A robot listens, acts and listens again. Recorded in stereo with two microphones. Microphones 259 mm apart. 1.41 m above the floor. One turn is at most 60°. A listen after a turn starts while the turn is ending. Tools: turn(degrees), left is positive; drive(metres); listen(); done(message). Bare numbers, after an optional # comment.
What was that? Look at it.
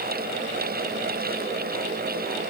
listen()
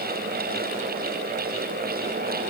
listen()
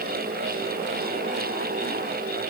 done("I can't make out anything.")